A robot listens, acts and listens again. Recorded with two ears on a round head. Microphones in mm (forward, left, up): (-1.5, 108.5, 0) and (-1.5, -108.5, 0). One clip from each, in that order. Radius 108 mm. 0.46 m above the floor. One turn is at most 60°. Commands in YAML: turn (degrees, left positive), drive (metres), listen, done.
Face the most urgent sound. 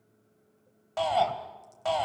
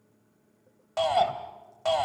turn: -30
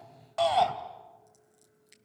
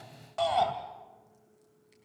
turn: 15
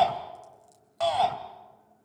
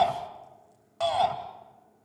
done: "Found it: a shout, straight ahead."